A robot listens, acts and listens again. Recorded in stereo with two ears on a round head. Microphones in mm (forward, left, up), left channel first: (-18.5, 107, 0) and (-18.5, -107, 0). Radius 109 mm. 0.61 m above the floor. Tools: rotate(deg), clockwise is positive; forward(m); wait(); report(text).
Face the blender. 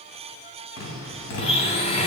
rotate(-25)
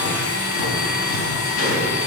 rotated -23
rotate(-130)
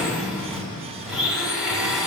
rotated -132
report("Found it: a blender, straight ahead, 1 to 2 m away.")